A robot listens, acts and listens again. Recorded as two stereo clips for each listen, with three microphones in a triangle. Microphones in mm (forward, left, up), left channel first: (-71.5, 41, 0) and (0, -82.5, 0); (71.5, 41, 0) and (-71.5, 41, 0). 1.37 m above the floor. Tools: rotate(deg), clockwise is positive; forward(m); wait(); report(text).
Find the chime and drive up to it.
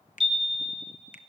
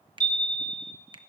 rotate(20)
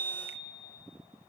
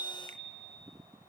forward(1.0)
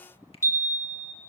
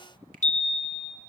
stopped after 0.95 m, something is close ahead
rotate(-10)
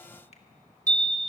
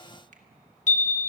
report("I am next to the chime.")